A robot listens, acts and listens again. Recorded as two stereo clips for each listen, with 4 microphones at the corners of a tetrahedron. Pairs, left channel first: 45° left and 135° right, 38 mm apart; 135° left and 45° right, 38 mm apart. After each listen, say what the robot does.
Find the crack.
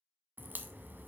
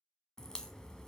Turn 155° right.
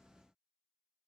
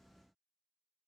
Facing where the crack came from. I can't hear it now.